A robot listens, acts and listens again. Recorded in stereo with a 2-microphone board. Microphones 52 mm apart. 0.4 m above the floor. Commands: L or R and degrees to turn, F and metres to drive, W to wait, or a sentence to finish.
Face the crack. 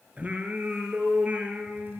W
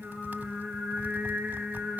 W
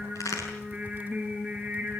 L90
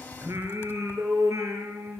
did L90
Facing where the crack came from. I can't hear it now.